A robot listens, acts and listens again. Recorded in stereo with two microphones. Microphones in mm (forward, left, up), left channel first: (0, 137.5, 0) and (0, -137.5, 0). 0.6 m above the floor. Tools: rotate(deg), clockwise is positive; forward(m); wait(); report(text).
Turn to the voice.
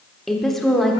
rotate(-30)
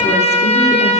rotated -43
wait()
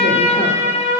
wait()
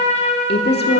rotate(-135)
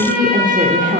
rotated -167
rotate(30)
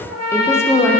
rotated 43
rotate(-10)
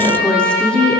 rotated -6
report("Facing the woman speaking, 1 to 2 m away.")